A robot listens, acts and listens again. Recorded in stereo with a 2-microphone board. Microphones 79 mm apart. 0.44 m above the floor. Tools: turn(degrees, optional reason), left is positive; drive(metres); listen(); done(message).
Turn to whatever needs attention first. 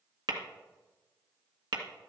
listen()
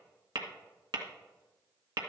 listen()
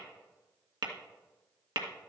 done("I can't make out anything urgent, only tapping.")